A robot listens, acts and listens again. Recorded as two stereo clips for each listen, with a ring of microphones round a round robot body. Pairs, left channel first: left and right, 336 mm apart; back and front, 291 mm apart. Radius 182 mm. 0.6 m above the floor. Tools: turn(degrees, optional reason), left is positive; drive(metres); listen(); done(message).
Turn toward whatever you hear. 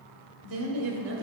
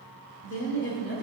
turn(degrees=-140, reason="The woman speaking: 140° right.")
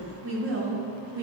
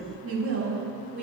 turn(degrees=-55, reason="The woman speaking is now 55° right.")
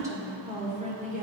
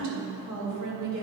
turn(degrees=-25, reason="The woman speaking is now 25° right.")
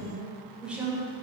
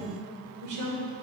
done("Facing the woman speaking, 2 to 4 m away.")